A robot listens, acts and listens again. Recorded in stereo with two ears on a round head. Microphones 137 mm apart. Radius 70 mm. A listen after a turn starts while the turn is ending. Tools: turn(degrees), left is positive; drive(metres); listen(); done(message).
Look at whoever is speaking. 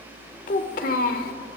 turn(degrees=70)
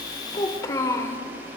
turn(degrees=20)
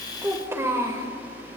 turn(degrees=-20)
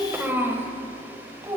turn(degrees=-20)
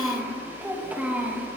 turn(degrees=-10)
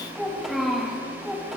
done("Found it: a child speaking, straight ahead, 2 to 4 m away.")